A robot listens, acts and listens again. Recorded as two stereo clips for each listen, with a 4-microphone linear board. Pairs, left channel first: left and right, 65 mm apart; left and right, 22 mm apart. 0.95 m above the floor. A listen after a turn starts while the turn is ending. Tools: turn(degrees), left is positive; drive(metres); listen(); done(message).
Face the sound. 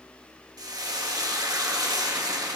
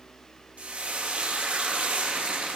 turn(degrees=-65)
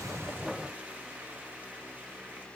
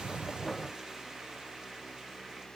listen()
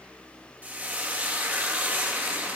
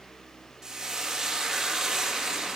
turn(degrees=-30)
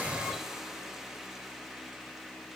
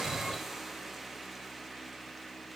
turn(degrees=-10)
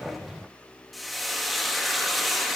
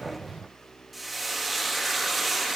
done("Found it: frying, straight ahead.")